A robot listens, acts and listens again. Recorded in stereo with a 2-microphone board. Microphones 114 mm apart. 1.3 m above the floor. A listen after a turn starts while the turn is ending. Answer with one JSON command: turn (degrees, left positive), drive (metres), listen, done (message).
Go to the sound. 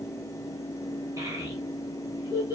{"turn": -30}
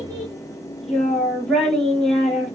{"drive": 1.0}
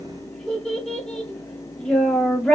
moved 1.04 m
{"drive": 1.0}
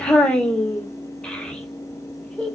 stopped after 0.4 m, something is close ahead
{"turn": 10}
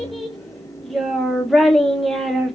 {"done": "Arrived at the child speaking, straight ahead."}